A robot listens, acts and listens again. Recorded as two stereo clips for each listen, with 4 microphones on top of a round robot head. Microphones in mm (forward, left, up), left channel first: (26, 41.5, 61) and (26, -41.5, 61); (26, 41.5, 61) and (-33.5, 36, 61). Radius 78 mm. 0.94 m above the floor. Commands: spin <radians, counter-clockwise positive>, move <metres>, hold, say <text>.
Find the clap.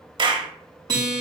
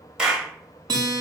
spin -1.75
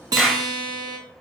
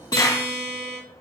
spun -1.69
say Facing the clap.